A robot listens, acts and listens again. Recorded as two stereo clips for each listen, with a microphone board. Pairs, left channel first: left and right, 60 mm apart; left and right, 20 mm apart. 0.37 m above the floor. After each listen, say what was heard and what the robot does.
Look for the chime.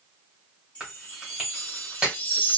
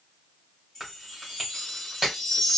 The chime: about 25° left or 155° left. Turn 25° left.
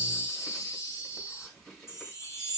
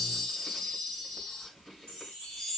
So it is at 130° left. Turn 130° left.
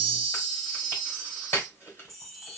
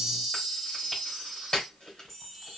Facing the chime.